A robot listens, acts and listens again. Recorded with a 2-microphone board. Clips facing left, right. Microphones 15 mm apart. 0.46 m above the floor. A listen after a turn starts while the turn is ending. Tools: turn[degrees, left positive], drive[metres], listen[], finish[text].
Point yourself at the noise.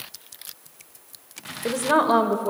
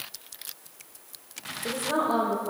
Thought: The woman speaking: about 60° left or 120° left.
Action: turn[60]
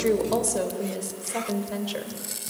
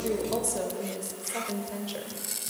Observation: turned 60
Thought: So it is at 35° left.
Action: turn[35]
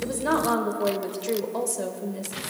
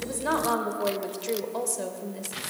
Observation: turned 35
Action: finish[Found it: a woman speaking, straight ahead, 1 to 2 m away.]